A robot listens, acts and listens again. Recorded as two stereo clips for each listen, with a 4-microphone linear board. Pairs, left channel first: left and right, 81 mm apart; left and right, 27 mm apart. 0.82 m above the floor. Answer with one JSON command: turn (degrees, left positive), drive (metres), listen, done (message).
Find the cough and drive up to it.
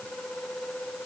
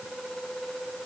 {"listen": true}
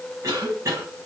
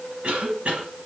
{"turn": -40}
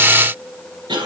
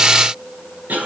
{"turn": -105}
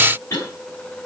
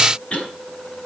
{"turn": 35}
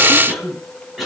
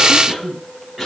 {"drive": 1.0}
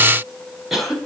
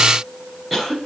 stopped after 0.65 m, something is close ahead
{"done": "Blocked. The cough is further on, straight ahead."}